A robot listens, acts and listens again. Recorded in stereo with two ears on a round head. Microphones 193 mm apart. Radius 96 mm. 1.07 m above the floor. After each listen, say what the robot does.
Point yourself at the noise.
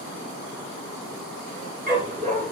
Turn 40° right.
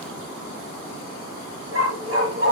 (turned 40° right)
Turn 105° right.
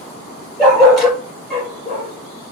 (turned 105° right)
Found it: a dog barking, straight ahead, over 4 m away.